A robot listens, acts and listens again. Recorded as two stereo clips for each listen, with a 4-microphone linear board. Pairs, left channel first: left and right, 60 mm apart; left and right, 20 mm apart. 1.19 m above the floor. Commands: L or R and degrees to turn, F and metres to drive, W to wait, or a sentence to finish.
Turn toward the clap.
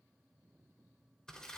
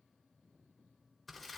W
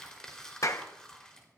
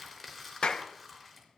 L60
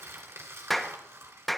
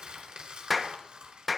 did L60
Facing the clap, under 1 m away.